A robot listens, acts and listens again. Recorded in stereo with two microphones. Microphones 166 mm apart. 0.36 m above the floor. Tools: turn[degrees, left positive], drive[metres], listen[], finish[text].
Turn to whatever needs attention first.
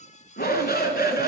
Thought: The shout: about 70° left or 110° left.
Action: turn[70]
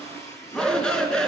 Action: finish[Facing the shout.]